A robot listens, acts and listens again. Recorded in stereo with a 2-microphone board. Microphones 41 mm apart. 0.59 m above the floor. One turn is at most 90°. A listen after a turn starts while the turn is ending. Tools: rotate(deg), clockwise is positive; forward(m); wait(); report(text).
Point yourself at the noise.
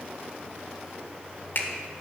rotate(-45)
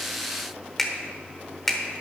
report("Facing the finger snap.")